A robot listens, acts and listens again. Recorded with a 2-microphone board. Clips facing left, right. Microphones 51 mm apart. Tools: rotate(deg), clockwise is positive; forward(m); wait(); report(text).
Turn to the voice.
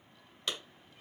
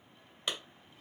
wait()
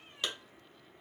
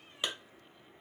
wait()
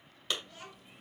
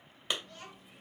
rotate(-30)
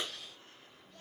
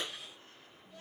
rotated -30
rotate(15)
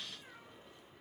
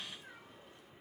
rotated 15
wait()
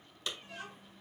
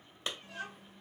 report("Found it: a child speaking, straight ahead.")